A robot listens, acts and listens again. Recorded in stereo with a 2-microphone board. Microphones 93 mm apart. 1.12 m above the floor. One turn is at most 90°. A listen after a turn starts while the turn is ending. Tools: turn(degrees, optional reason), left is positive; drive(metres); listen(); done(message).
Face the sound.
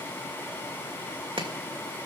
turn(degrees=-65, reason="The chopping: about 65° right or 115° right.")
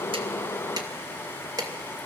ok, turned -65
turn(degrees=-45, reason="So it is at 45° right.")
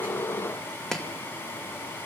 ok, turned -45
done("Found it: chopping, straight ahead, 2 to 4 m away.")